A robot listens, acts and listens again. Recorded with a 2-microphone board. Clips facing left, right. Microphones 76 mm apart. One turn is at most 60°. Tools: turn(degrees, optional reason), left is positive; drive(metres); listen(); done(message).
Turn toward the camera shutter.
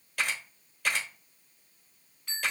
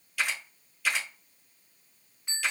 turn(degrees=50, reason="The camera shutter: about 50° left or 130° left.")
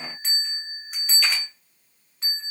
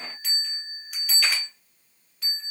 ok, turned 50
listen()
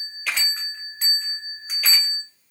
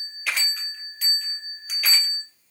done("Facing the camera shutter.")